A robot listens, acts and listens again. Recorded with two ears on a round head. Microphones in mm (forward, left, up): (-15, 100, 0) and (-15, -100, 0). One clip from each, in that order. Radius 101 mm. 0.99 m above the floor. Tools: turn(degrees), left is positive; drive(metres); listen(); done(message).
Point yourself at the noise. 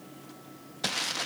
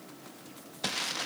turn(degrees=30)
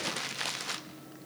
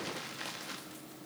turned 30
turn(degrees=140)
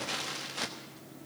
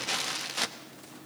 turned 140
turn(degrees=-20)
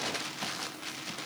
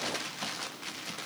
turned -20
done("Found it: crumpling, straight ahead, 1 to 2 m away.")